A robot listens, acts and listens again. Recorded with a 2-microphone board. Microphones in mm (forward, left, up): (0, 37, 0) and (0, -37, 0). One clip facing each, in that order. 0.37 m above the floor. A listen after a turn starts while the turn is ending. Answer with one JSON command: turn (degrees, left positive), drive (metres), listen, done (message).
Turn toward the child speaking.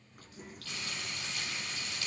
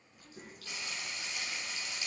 {"turn": -90}
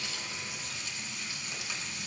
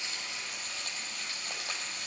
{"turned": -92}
{"listen": true}
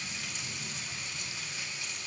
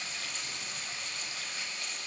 {"listen": true}
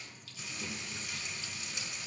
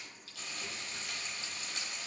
{"done": "Facing where the child speaking came from. I can't hear it now."}